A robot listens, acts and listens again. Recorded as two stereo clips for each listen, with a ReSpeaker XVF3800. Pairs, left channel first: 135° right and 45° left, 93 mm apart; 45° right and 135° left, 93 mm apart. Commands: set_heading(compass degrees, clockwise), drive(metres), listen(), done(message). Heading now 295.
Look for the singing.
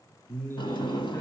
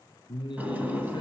set_heading(10)
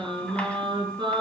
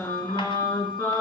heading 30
set_heading(15)
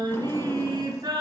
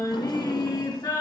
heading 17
done("Found it: singing, straight ahead.")